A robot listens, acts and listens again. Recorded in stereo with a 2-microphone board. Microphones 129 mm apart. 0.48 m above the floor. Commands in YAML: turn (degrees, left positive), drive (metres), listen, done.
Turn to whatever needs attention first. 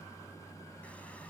listen: true
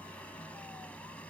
listen: true
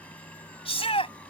turn: 50
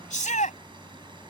turn: 80
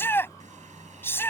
turn: 15
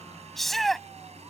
done: "Facing the shout."